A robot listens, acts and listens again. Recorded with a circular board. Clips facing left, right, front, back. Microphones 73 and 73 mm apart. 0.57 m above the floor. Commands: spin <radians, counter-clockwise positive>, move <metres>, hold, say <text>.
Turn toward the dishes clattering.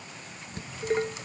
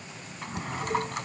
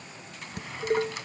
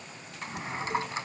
spin 0.70
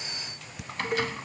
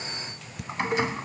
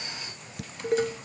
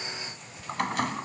say Facing the dishes clattering.